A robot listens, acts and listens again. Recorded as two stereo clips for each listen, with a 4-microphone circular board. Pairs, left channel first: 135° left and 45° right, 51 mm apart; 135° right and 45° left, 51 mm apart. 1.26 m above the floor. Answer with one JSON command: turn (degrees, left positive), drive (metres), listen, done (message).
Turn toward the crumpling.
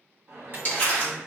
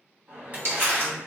{"turn": 80}
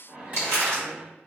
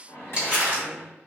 {"turn": -20}
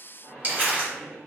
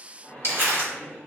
{"turn": 10}
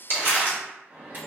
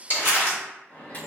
{"done": "Facing the crumpling, 1 to 2 m away."}